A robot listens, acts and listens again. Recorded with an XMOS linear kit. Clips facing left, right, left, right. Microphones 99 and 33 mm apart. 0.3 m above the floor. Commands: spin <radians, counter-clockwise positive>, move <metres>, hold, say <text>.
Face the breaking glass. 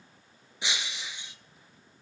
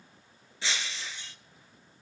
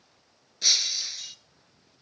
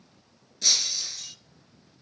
spin 0.26
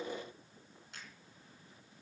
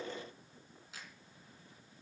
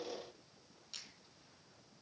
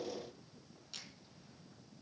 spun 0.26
hold
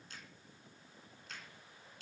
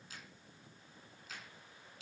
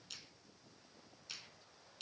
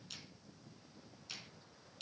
say I heard breaking glass, but can't make it out now. It was about straight ahead or 150° left.